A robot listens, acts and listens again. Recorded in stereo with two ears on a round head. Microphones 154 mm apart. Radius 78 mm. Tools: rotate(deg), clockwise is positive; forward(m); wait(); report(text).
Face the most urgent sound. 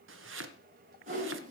wait()
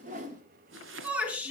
rotate(30)
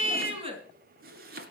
rotate(145)
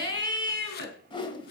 rotate(-25)
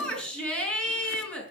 report("Found it: a shout, straight ahead, over 4 m away.")